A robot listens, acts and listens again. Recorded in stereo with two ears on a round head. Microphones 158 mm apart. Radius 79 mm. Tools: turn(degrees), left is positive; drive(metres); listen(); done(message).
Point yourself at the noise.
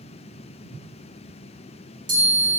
turn(degrees=-50)
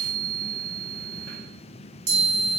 turn(degrees=-65)
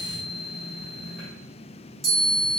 done("Found it: a chime, straight ahead.")